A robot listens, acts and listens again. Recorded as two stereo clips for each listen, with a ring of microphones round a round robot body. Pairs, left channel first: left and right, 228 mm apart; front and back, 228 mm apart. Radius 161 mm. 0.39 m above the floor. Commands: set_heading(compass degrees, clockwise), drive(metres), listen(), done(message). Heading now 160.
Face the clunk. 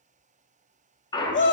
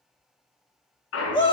set_heading(140)
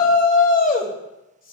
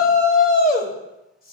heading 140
done("Facing where the clunk came from. I can't hear it now.")